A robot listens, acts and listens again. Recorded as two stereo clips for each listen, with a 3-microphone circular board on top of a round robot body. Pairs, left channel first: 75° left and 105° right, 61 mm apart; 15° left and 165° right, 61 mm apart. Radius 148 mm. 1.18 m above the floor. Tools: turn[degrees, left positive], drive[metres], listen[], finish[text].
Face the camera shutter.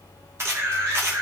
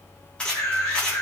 Thought: The camera shutter: 60° right.
Action: turn[-60]
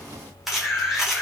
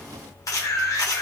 Thought: The camera shutter is now 20° right.
Action: turn[-20]
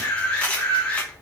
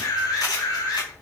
Action: finish[Found it: a camera shutter, straight ahead.]